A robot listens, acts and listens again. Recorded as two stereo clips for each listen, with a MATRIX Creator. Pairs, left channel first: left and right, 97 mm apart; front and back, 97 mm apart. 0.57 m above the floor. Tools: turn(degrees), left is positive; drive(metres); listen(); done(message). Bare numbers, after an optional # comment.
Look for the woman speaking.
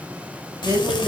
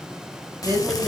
# The woman speaking: 145° right.
turn(-145)
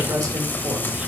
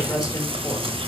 listen()
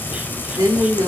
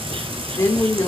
# The woman speaking is now 55° right.
turn(-55)
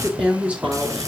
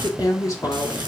# The woman speaking is now 25° right.
turn(-25)
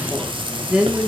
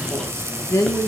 # The woman speaking is now 15° right.
turn(-15)
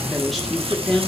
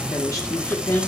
done("Facing the woman speaking, 1 to 2 m away.")